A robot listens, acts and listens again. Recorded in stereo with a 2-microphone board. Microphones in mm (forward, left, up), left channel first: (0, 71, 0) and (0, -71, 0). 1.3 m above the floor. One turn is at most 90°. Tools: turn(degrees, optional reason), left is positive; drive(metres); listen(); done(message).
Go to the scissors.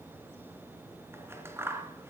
turn(degrees=-20, reason="The scissors: about 20° right or 160° right.")
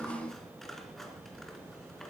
listen()
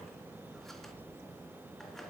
listen()
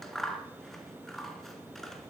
drive(metres=1.0)
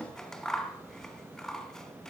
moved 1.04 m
drive(metres=1.0)
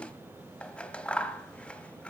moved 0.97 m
turn(degrees=10, reason="The scissors is now 10° left.")
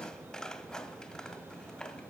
drive(metres=1.0)
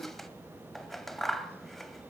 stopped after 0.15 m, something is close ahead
done("I am next to the scissors.")